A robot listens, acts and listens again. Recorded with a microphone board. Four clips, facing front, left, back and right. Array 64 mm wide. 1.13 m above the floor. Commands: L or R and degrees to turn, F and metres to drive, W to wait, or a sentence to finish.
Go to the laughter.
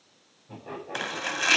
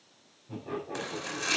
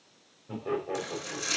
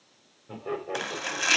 R125
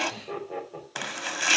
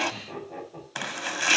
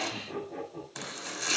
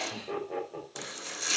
R40
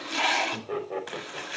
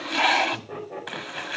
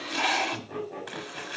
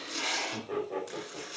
R10
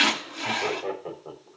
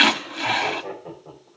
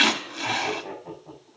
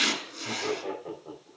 F1.0
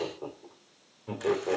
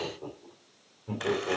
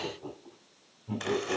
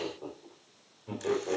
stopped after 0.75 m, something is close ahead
Blocked. The laughter is further on, straight ahead.